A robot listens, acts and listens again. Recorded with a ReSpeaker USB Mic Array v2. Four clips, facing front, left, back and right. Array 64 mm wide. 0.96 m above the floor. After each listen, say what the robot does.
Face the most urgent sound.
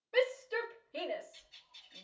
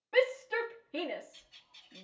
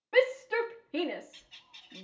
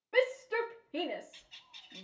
Turn 175° left.
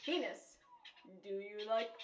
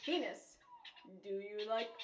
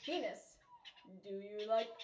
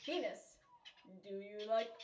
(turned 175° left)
Turn 40° left.
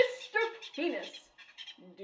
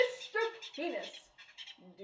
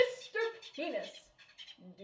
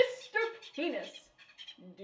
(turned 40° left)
Turn 15° right.
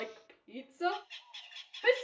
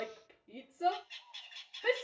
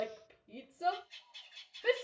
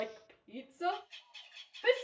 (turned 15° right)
Facing the shout, 1 to 2 m away.